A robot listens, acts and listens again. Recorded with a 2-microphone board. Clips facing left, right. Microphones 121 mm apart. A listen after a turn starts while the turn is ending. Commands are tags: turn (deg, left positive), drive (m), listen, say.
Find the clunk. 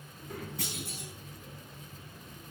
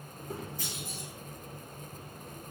<turn deg="70"/>
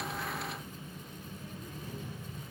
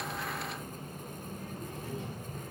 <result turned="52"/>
<listen/>
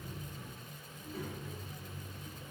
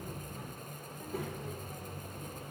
<say>I heard a clunk, but can't make it out now. It was about 15° left or 60° left.</say>